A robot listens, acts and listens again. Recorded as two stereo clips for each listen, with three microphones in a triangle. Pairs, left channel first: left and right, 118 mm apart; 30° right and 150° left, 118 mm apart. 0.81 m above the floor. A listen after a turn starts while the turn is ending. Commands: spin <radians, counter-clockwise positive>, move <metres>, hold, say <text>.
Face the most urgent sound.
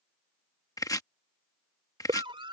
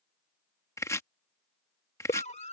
spin -0.79
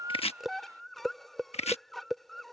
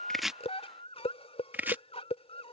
say Facing the scream.